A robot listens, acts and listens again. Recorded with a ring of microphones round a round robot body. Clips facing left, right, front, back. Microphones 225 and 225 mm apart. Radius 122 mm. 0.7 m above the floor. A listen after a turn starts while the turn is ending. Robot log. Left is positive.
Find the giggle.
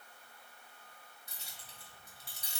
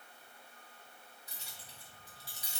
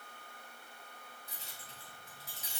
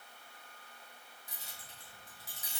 cmd idle
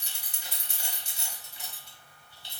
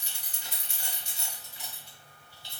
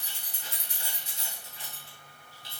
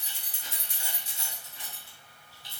cmd idle
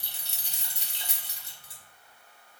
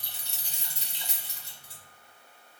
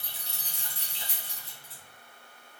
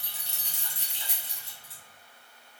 end: I can't make out a giggle, only keys jangling.